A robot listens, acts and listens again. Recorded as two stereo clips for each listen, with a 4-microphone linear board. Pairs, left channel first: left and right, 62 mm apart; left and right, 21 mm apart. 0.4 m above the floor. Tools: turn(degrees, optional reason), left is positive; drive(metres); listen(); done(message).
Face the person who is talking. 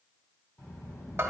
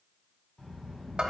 turn(degrees=50, reason="The child speaking: about 50° left or 130° left.")
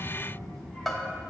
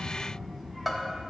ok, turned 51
turn(degrees=10, reason="So it is at 10° left.")
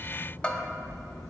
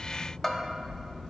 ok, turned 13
done("Facing the child speaking, 2 to 4 m away.")